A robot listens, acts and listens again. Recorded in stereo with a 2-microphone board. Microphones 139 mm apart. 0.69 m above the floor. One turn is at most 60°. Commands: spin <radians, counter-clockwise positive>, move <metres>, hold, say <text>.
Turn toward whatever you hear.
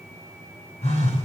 spin 0.87
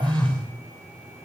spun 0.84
say Found it: a phone buzzing, straight ahead.